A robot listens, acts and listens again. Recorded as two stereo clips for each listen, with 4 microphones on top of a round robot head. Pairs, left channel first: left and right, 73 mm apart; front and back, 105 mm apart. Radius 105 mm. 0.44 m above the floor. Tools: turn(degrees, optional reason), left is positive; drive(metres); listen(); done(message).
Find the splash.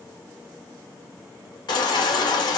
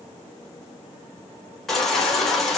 listen()
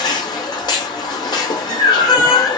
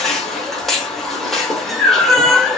listen()
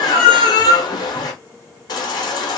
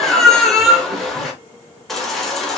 done("I can't make out a splash to turn to.")